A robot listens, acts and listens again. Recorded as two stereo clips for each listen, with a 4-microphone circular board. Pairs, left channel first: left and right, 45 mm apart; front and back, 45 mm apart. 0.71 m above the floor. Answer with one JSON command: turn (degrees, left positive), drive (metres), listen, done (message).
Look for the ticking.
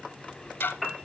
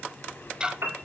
{"turn": 110}
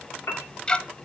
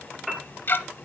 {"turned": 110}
{"turn": 25}
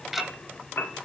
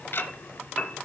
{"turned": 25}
{"turn": -10}
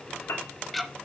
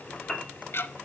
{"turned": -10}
{"done": "Found it: ticking, straight ahead, under 1 m away."}